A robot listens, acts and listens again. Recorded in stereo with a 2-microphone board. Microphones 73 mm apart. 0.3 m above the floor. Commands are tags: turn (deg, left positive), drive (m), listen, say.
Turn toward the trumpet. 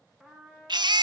<turn deg="-30"/>
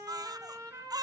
<turn deg="-140"/>
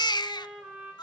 <say>Facing the trumpet.</say>